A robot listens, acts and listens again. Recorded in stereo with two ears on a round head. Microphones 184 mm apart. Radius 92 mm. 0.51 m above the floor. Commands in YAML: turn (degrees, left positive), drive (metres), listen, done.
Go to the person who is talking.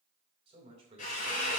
turn: -30
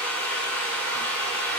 listen: true
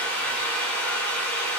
listen: true
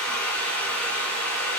done: "I heard a man speaking, but can't make it out now. It was about straight ahead or 120° right. I did not reach it."